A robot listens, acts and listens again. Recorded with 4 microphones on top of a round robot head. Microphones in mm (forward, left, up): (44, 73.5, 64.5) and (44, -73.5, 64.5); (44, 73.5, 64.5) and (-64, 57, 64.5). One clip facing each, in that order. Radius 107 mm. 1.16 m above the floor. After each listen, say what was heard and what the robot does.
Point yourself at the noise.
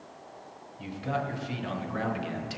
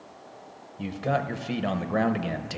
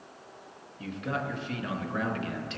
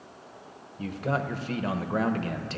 The man speaking: 120° right. Turn 120° right.
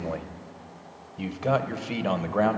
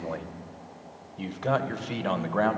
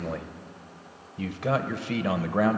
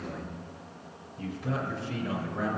The man speaking is now 10° left. Turn 10° left.
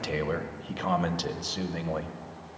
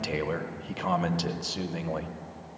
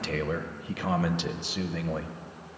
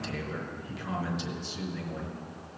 Found it: a man speaking, straight ahead.